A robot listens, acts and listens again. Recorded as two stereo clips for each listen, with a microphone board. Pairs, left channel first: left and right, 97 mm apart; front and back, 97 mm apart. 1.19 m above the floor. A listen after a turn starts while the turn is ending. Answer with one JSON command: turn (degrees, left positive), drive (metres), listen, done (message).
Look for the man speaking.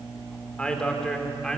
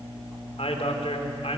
{"done": "Found it: a man speaking, straight ahead."}